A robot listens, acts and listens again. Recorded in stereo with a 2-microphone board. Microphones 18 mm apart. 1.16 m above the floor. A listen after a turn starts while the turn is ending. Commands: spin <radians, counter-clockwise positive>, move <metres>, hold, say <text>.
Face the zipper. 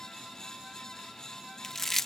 hold
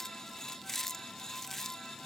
hold
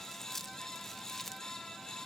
say I can't make out a zipper to turn to.